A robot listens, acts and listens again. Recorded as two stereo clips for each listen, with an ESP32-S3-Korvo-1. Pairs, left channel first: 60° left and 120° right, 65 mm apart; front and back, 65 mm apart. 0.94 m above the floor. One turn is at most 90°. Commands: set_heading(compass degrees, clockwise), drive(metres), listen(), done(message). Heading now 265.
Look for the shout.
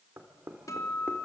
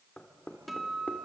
listen()
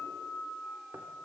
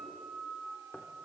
listen()
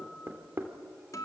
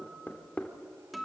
done("I can't make out a shout to turn to.")